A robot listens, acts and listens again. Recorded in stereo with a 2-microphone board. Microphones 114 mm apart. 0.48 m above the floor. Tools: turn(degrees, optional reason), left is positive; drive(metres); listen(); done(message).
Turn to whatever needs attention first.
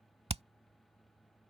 listen()
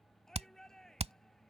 turn(degrees=30)
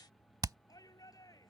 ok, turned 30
turn(degrees=150, reason="So it is at 150° left.")
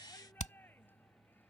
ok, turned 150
turn(degrees=20, reason="The shout is now 20° left.")
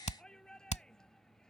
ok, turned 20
done("Found it: a shout, straight ahead.")